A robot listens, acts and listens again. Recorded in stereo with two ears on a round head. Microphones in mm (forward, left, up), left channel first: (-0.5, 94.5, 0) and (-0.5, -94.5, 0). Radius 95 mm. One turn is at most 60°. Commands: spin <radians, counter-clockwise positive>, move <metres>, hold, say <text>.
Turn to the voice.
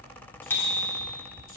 hold
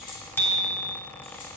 hold
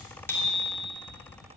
say I can't make out anyone speaking, only a bicycle bell.